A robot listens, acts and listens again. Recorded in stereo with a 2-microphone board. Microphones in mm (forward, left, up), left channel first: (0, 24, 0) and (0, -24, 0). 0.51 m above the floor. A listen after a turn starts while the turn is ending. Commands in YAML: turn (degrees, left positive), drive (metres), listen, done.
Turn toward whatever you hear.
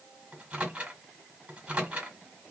turn: -25
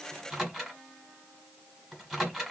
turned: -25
done: "Found it: a microwave, straight ahead."